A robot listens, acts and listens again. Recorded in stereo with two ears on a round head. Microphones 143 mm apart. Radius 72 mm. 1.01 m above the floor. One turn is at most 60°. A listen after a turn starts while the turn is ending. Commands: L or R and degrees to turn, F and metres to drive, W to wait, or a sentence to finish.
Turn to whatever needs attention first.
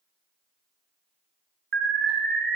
R60
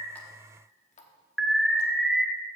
Facing the alarm.